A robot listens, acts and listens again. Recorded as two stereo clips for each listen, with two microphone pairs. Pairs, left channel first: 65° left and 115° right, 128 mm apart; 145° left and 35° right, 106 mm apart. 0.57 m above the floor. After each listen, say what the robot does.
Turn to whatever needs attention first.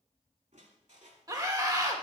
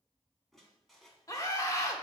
Turn 165° right.
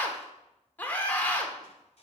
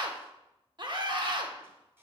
Found it: a scream, straight ahead.